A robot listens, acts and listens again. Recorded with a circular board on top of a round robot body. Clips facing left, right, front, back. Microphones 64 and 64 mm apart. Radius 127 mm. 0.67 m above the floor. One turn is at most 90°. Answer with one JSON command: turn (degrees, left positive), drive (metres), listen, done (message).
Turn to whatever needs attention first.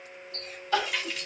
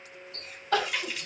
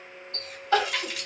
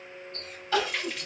{"turn": -50}
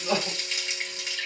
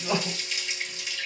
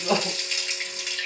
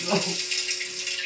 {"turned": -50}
{"done": "Found it: crying, straight ahead."}